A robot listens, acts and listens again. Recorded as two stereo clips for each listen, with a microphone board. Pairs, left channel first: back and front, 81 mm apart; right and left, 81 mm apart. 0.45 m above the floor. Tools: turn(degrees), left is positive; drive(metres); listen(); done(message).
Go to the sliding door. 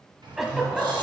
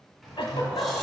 drive(metres=1.0)
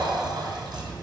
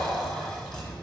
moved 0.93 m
turn(degrees=-15)
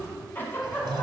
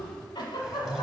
drive(metres=1.0)
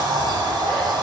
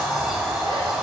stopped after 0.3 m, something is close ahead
done("I am next to the sliding door.")